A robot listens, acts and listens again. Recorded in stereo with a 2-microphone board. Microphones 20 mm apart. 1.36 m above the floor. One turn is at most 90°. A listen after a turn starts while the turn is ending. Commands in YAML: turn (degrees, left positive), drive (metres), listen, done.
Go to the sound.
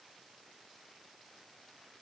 listen: true
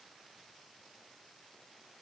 listen: true
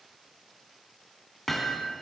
turn: 30
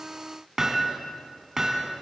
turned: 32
turn: -25
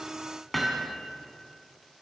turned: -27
drive: 1.0
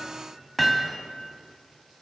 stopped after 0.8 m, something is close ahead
done: "Blocked. The hammering is further on, straight ahead."